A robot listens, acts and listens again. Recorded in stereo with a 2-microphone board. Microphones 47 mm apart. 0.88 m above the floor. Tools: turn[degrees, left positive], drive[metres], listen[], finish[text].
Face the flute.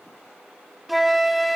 Action: turn[30]
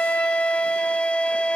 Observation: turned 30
Thought: So it is at 155° left.
Action: turn[155]
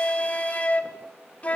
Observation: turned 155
Thought: The flute is now 30° left.
Action: turn[30]
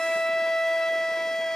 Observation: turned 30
Thought: The flute is now 10° left.
Action: turn[10]
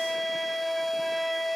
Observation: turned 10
Action: finish[Found it: a flute, straight ahead.]